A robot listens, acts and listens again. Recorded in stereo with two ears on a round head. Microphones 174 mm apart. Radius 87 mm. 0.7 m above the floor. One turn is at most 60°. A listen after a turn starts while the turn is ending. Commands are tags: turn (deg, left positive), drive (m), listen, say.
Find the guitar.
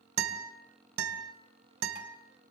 <turn deg="-60"/>
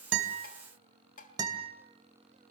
<turn deg="-20"/>
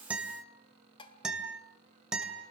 <say>Found it: a guitar, straight ahead, 2 to 4 m away.</say>